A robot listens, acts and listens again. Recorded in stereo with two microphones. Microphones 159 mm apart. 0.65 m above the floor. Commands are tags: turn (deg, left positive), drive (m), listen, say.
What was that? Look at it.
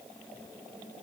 <listen/>
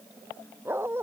<turn deg="-30"/>
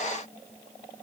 <listen/>
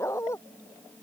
<turn deg="20"/>
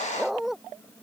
<say>Found it: a dog barking, straight ahead.</say>